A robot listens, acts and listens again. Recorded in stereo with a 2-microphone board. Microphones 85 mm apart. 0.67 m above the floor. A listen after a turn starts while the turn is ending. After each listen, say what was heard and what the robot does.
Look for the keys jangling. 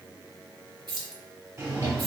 The keys jangling: about 65° right or 115° right. Turn 65° right.
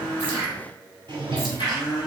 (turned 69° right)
Keep listening.
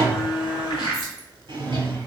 Keep listening.
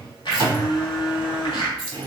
Found it: keys jangling, straight ahead.